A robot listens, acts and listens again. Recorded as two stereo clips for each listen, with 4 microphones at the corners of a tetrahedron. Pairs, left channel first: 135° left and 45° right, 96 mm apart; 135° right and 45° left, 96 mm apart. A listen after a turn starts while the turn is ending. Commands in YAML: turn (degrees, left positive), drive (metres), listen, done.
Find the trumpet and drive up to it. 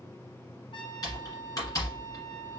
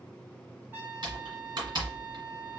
turn: 120
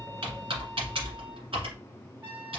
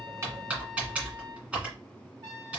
drive: 1.0
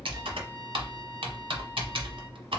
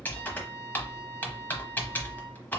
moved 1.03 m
listen: true
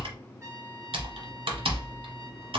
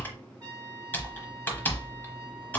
turn: 10
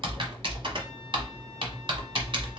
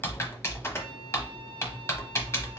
listen: true
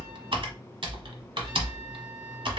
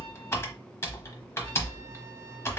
listen: true
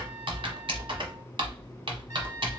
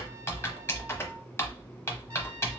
done: "I heard a trumpet from this way, but can't make it out now. I did not reach it."